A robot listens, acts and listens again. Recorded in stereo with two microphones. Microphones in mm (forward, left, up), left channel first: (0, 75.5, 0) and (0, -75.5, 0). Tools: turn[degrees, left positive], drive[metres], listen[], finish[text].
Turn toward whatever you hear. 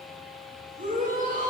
Thought: The shout: about 55° right or 125° right.
Action: turn[-55]
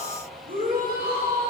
Thought: So it is at 70° right.
Action: turn[-70]
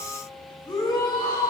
Thought: The shout is now 25° left.
Action: turn[25]
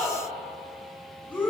Thought: The shout is now 10° left.
Action: turn[10]
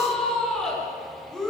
Action: finish[Facing the shout, over 4 m away.]